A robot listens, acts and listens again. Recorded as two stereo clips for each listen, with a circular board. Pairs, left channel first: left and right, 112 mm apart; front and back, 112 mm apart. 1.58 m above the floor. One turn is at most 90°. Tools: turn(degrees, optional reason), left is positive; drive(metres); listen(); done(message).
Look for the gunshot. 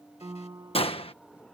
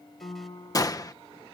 turn(degrees=55, reason="The gunshot: 55° left.")
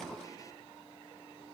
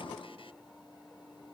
done("Facing where the gunshot came from. I can't hear it now.")